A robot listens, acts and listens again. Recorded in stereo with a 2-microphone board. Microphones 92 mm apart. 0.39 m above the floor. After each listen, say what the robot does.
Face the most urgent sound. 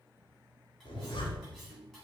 Keep listening.
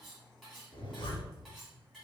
Keep listening.
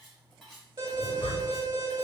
Turn 55° right.
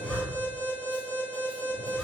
Turn 55° right.
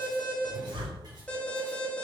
Turn 20° left.
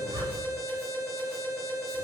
Found it: an alarm, straight ahead.